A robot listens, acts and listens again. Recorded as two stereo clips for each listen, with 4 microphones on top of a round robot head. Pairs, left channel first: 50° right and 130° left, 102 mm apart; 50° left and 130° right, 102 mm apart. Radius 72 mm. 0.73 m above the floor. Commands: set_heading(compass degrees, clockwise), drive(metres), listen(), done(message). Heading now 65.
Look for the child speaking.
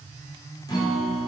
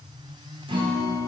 listen()
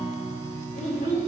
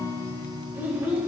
set_heading(120)
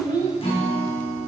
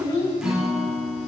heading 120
done("Found it: a child speaking, straight ahead, 2 to 4 m away.")